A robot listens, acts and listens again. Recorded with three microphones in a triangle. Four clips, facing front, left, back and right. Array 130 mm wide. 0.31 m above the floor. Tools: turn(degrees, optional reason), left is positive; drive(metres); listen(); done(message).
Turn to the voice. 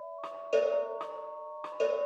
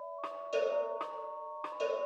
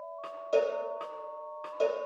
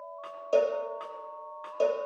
listen()
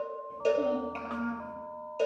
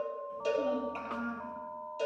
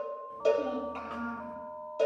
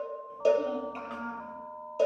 done("Facing the child speaking, over 4 m away.")